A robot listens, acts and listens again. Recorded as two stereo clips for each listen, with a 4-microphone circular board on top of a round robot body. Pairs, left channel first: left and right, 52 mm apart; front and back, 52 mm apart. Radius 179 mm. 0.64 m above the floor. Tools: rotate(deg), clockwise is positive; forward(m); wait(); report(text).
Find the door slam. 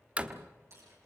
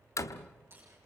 rotate(25)
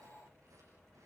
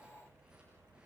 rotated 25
report("Facing where the door slam came from. I can't hear it now.")